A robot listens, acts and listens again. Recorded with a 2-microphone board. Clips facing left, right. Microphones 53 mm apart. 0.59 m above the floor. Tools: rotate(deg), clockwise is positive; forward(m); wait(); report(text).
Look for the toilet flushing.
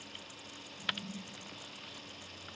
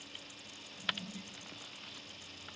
rotate(30)
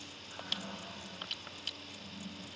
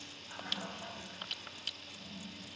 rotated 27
rotate(140)
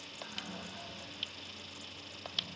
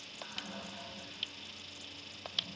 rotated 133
report("Facing the toilet flushing, over 4 m away.")